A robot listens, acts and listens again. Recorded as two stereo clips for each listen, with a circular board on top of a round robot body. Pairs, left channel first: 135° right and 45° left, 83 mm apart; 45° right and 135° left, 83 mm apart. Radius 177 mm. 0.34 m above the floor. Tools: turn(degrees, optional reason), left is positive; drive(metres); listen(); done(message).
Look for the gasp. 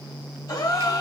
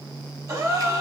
turn(degrees=-175, reason="The gasp: 175° right.")
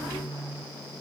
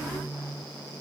done("Facing where the gasp came from. I can't hear it now.")